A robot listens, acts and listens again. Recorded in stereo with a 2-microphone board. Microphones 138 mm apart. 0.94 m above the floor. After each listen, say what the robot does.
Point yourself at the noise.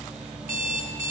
Turn 75° right.
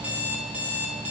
Turn 10° right.
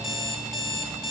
Found it: an alarm clock, straight ahead, under 1 m away.